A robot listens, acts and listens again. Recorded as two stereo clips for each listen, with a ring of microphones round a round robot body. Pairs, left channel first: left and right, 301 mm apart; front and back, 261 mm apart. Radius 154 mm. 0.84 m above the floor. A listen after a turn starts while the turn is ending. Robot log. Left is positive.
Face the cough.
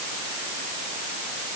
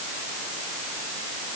cmd idle
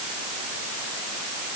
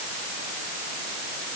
cmd idle
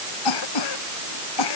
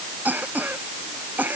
note: The cough: 95° left.
cmd yaw +95
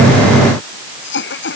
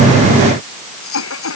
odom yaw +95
note: The cough is now 35° left.
cmd yaw +35
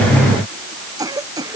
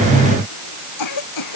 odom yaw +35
note: The cough is now 10° right.
cmd yaw -10
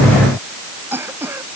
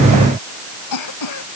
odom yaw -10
end: Facing the cough.